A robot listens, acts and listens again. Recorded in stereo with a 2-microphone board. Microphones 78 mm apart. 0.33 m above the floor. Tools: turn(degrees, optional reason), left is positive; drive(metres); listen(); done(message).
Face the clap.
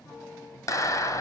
turn(degrees=45, reason="The clap: about 45° left or 135° left.")
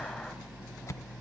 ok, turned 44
listen()
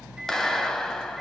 turn(degrees=10, reason="So it is at 10° left.")
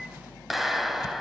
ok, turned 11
done("Found it: a clap, straight ahead, 1 to 2 m away.")